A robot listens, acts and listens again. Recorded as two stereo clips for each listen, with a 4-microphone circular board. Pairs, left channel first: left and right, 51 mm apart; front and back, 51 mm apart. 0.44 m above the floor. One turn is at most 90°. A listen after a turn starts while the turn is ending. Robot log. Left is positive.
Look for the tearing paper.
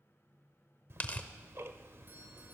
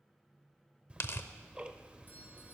note: The tearing paper: 30° left.
cmd yaw +30
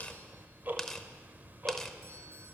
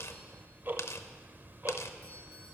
note: The tearing paper is now 10° left.
cmd yaw +10
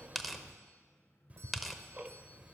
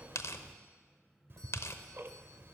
end: Found it: tearing paper, straight ahead, under 1 m away.